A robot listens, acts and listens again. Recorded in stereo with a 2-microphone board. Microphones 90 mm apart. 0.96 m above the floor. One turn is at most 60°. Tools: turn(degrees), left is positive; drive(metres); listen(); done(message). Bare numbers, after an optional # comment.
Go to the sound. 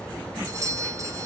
# The doorbell: about 40° right or 140° right.
turn(-40)
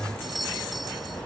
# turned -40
drive(1.0)
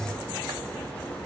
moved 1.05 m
listen()
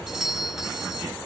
drive(1.0)
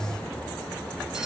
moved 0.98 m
listen()
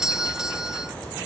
# The doorbell is now 10° right.
turn(-10)
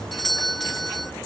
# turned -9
drive(1.0)
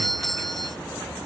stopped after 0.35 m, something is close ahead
done("Arrived at the doorbell, straight ahead.")